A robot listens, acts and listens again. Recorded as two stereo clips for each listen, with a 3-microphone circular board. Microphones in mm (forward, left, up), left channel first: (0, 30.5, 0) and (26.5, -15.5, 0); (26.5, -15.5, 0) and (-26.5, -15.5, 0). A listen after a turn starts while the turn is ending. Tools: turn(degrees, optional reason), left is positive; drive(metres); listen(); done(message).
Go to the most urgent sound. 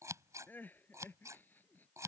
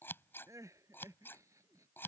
turn(degrees=170, reason="The crying: 170° left.")
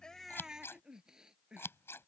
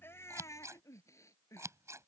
turn(degrees=15, reason="The crying is now 15° left.")
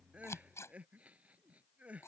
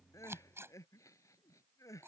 drive(metres=1.0)
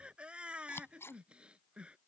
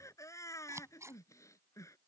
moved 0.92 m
turn(degrees=10, reason="The crying is now 10° left.")
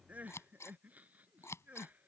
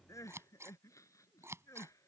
drive(metres=1.0)
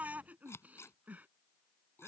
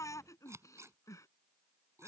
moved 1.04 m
drive(metres=1.0)
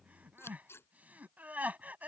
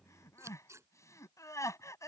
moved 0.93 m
drive(metres=1.0)
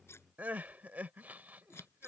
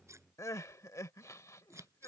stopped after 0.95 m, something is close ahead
done("Arrived at the crying, straight ahead.")